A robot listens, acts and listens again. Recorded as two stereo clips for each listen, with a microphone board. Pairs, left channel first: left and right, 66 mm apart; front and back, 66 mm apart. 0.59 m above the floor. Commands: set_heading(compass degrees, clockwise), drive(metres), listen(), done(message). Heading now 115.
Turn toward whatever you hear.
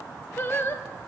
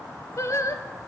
set_heading(80)
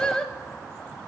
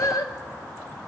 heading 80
set_heading(70)
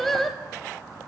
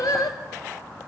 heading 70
done("Facing the singing, under 1 m away.")